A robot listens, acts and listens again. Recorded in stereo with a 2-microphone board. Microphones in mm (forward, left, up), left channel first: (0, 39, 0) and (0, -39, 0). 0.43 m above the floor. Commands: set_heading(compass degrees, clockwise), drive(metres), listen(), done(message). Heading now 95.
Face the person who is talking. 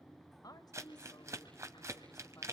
set_heading(40)
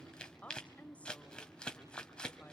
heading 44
set_heading(29)
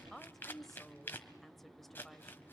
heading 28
done("Facing the woman speaking.")